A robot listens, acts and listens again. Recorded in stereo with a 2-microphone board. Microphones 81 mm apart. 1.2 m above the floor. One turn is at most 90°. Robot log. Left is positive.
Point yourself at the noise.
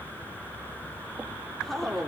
cmd yaw +30
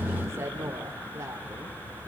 note: So it is at 35° right.
cmd yaw -35
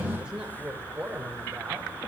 note: The woman speaking is now 15° right.
cmd yaw -15
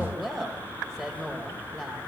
end: Found it: a woman speaking, straight ahead, over 4 m away.